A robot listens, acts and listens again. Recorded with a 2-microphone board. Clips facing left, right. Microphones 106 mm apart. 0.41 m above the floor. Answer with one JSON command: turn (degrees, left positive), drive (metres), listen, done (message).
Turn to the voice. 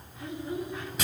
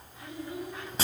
{"turn": 25}
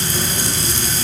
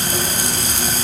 {"listen": true}
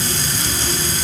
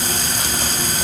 {"listen": true}
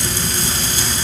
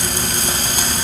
{"done": "I heard a child speaking, but can't make it out now. It was about straight ahead or 130° left."}